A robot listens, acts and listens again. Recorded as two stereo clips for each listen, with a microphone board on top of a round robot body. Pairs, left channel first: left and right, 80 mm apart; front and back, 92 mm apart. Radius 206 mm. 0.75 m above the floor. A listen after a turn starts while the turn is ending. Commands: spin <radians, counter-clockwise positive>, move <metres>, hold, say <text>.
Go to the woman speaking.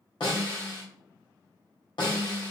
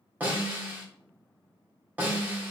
hold
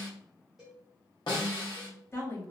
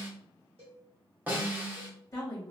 spin 0.79
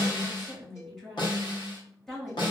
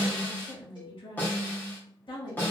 move 1.0
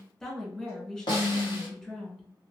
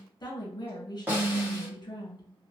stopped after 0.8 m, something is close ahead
spin 0.17
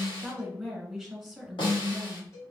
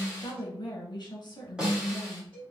say I am next to the woman speaking.